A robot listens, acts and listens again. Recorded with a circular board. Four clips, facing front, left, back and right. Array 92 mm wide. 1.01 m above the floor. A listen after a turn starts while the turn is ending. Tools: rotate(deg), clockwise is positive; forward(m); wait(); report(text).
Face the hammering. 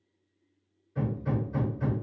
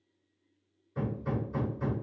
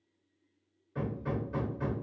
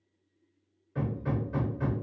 rotate(120)
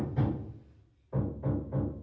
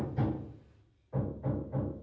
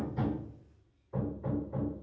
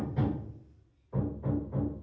report("Found it: hammering, straight ahead, 1 to 2 m away.")